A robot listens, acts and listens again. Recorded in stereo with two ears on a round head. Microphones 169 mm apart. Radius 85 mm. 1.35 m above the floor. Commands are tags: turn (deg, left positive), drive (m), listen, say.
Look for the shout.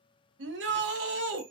<turn deg="-65"/>
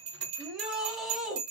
<say>Facing the shout, under 1 m away.</say>